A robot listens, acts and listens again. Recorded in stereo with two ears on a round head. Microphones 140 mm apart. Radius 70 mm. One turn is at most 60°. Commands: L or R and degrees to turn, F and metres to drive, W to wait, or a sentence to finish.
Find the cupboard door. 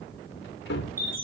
L60
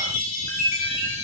L30
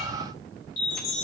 W
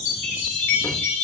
I heard a cupboard door from this way, but can't make it out now.